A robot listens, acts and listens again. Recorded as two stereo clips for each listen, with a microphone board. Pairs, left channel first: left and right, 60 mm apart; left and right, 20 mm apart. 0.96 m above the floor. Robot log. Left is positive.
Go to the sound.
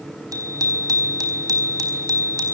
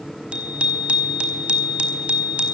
cmd yaw -90
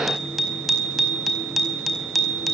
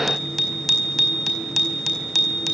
cmd fwd 1.0
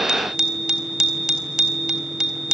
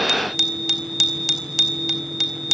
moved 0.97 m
note: The bicycle bell is now 10° right.
cmd yaw -10
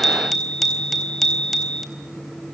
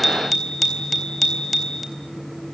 cmd fwd 1.0
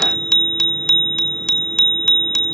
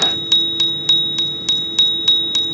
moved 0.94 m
note: The bicycle bell is now 10° left.
cmd yaw +10
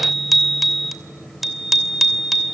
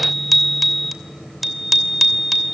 cmd fwd 1.0
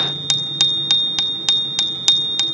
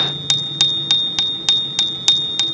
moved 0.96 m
cmd fwd 1.0
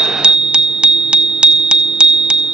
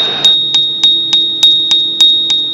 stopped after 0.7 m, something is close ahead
note: The bicycle bell is now 15° right.
cmd yaw -15
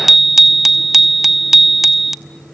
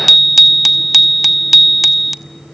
end: Arrived at the bicycle bell, straight ahead.